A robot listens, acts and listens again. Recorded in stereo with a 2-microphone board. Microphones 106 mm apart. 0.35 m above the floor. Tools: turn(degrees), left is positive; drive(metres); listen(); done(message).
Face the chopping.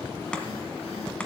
turn(degrees=30)
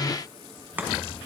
turn(degrees=-15)
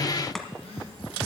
done("Found it: chopping, straight ahead, 1 to 2 m away.")